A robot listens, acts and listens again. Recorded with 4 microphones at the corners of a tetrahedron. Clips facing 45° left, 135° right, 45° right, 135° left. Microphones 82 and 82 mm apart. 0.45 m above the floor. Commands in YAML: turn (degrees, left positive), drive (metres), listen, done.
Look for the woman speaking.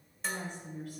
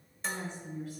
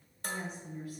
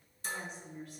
turn: 35
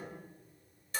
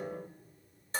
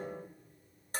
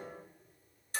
listen: true
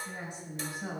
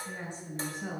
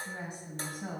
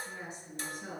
turn: -30
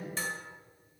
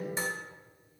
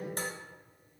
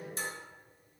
listen: true
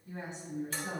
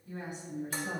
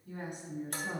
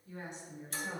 turn: -20
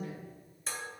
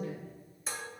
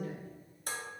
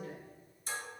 done: "Facing the woman speaking."